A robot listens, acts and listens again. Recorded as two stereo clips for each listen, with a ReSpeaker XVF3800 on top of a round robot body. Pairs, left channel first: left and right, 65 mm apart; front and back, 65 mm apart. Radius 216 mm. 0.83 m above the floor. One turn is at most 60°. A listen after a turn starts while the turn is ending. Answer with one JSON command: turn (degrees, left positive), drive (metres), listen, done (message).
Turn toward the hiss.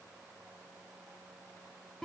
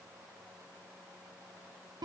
{"listen": true}
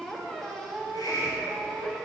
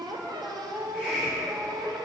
{"turn": 60}
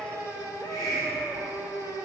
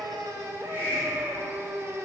{"turn": 60}
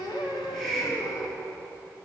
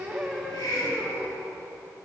{"done": "Facing the hiss."}